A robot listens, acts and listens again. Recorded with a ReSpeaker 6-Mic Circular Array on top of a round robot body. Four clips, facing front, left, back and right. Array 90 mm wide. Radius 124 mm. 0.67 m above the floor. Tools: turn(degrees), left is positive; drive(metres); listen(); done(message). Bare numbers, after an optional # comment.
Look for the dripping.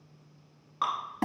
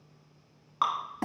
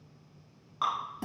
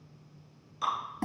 # The dripping: 85° left.
turn(85)
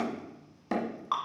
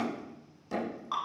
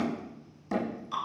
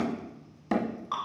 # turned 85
done("Found it: dripping, straight ahead, 1 to 2 m away.")